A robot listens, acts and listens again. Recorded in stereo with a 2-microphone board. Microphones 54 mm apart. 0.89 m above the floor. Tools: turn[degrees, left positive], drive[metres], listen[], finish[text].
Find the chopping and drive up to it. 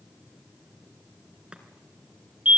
Thought: The chopping: about 20° right or 160° right.
Action: turn[-20]
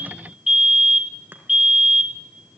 Action: listen[]
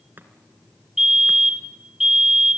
Thought: So it is at 140° right.
Action: turn[-140]
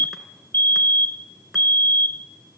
Action: drive[1.0]
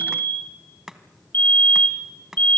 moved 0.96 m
Thought: The chopping is now 10° right.
Action: turn[-10]
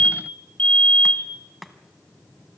Action: drive[1.0]
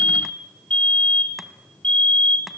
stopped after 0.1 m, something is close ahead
Action: listen[]
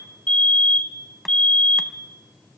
Action: listen[]
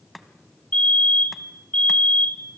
Action: finish[I am next to the chopping.]